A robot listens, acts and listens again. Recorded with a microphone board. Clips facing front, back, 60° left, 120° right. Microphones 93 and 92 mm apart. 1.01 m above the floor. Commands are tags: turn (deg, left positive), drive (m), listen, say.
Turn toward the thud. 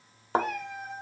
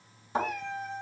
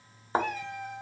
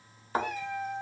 <say>Facing the thud.</say>